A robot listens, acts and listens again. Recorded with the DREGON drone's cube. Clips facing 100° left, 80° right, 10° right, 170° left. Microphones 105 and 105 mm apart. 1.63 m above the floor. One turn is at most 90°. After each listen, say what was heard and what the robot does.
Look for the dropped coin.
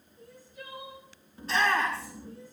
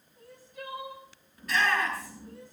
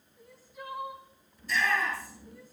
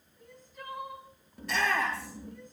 Keep listening.
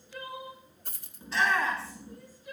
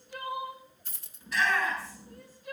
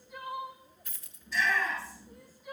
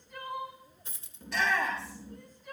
The dropped coin: 115° left. Turn 90° left.
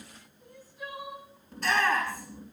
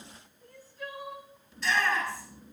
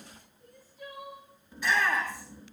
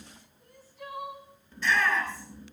Nothing new. It was at 25° left. Turn 25° left.
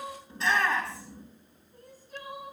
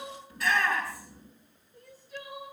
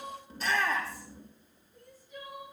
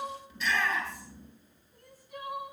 I heard a dropped coin from this way, but can't make it out now.